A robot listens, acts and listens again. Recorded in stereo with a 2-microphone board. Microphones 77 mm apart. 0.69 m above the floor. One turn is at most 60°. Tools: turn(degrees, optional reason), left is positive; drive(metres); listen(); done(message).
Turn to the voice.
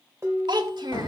turn(degrees=-60, reason="The child speaking: about 70° right or 110° right.")
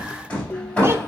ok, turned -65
listen()
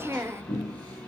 turn(degrees=-35, reason="So it is at 35° right.")
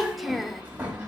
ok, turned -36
done("Facing the child speaking, 1 to 2 m away.")